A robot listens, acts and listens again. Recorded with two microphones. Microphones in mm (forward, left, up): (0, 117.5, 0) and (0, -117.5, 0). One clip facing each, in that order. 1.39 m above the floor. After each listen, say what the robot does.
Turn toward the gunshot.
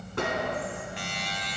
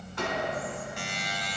Turn 60° left.
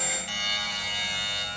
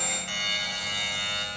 Keep listening.
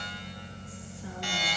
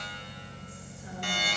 I heard a gunshot, but can't make it out now. It was about straight ahead or 60° left.